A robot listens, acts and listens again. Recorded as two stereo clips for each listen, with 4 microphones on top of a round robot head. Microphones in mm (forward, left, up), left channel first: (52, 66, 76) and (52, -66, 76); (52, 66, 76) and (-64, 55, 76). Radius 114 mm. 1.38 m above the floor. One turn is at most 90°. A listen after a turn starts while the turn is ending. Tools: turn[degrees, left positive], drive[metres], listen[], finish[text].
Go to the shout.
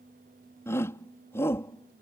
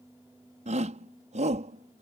Thought: The shout: 165° left.
Action: turn[90]
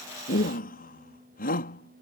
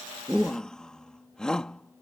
Thought: The shout is now 90° left.
Action: turn[90]
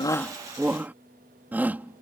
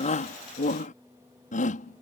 Thought: The shout is now 10° right.
Action: turn[-10]
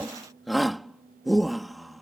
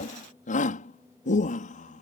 Action: drive[1.0]
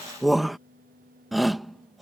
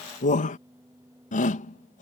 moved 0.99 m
Action: drive[1.0]
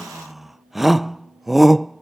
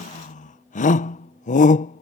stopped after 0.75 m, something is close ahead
Action: finish[Arrived at the shout, straight ahead.]